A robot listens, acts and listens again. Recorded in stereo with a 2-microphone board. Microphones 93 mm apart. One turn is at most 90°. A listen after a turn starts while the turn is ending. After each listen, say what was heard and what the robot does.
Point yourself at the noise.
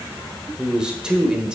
Turn 30° right.
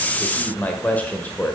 So it is at 20° left. Turn 20° left.
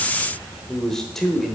Found it: a man speaking, straight ahead, 1 to 2 m away.